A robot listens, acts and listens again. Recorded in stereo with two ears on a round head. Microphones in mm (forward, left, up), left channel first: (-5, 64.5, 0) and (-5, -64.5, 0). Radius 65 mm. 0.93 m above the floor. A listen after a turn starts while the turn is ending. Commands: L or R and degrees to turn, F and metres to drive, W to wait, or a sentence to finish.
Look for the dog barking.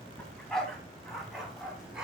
R30
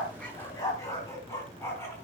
L15
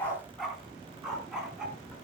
Facing the dog barking, 2 to 4 m away.